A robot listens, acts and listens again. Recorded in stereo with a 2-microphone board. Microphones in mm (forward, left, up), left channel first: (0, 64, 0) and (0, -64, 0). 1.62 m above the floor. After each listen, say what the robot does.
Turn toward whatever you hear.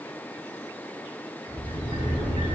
Turn 65° left.
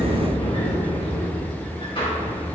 Turn 50° left.
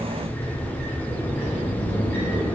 Turn 15° left.
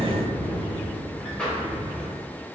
Facing the sliding door, 2 to 4 m away.